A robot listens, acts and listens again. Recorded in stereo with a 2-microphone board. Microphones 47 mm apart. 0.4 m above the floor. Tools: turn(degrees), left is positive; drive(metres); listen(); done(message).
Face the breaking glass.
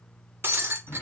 turn(degrees=-50)
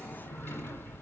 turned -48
listen()
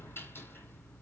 done("I heard breaking glass, but can't make it out now. It was about 5° right or 80° right.")